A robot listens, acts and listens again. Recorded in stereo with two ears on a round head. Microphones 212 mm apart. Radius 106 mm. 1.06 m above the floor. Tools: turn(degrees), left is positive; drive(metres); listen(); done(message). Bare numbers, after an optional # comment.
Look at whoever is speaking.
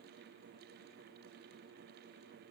listen()
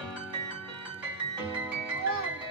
# The child speaking: about 65° right or 115° right.
turn(-65)
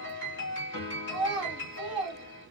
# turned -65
done("Found it: a child speaking, straight ahead.")